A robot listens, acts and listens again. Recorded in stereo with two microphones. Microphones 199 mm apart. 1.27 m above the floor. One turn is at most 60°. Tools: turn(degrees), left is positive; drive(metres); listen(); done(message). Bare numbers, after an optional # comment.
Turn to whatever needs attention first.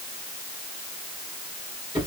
listen()
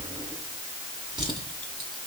listen()
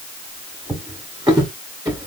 done("I can't make out anything urgent, only a drawer.")